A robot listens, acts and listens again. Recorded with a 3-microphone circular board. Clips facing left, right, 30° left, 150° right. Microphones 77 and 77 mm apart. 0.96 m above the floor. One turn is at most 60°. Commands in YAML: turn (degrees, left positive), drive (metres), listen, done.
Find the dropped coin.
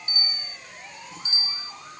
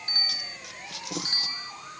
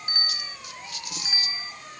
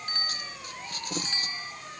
turn: -60
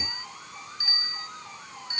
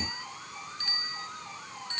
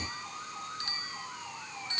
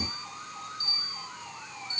turn: -40
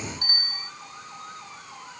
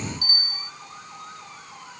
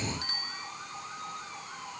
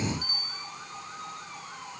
done: "I heard a dropped coin from this way, but can't make it out now."